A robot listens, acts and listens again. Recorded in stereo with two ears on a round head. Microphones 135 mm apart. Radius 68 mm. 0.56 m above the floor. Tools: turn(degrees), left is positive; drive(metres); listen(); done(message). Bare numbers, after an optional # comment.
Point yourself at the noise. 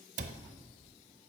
# The cupboard door: about 50° right or 130° right.
turn(-50)
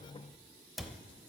done("Found it: a cupboard door, straight ahead, under 1 m away.")